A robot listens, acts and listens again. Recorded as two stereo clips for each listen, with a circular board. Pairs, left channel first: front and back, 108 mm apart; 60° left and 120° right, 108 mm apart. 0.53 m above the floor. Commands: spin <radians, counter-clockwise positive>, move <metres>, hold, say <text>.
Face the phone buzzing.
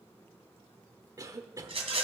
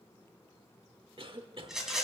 hold
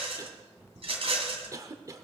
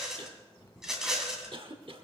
spin 1.83
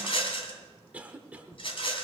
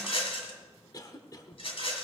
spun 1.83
hold
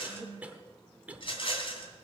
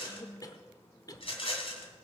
spin -0.35
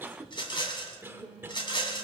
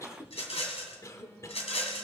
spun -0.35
hold
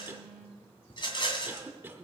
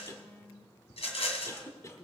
spin -0.17
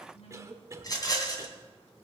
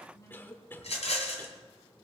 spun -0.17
say Found it: a phone buzzing, straight ahead.